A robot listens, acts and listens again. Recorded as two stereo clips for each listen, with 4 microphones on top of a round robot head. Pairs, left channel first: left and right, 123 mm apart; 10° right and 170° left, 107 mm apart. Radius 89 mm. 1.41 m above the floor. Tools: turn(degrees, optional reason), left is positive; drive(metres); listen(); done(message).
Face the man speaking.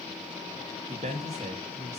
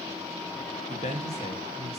turn(degrees=-45, reason="The man speaking: 45° right.")
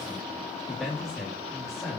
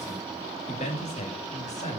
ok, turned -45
done("Facing the man speaking.")